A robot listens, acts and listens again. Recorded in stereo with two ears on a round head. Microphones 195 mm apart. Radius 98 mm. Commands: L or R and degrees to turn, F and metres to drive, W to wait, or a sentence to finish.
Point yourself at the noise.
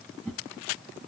L30
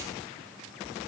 W
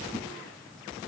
W
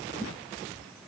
L140
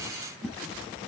R10
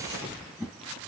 Facing the whoosh, 2 to 4 m away.